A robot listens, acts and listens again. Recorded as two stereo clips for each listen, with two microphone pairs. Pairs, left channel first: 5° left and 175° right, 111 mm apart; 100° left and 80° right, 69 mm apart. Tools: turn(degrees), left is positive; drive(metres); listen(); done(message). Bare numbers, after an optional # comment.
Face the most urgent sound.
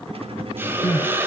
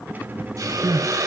# The crying: 50° right.
turn(-50)
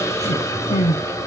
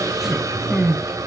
done("Found it: crying, straight ahead, under 1 m away.")